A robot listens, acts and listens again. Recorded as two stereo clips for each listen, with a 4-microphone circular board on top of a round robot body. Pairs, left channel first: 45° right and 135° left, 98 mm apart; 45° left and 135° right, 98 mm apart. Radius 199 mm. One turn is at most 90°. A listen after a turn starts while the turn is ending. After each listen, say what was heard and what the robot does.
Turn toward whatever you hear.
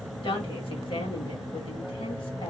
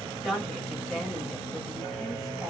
The woman speaking: 50° right. Turn 50° right.
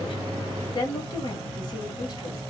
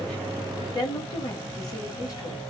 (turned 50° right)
Found it: a woman speaking, straight ahead, 1 to 2 m away.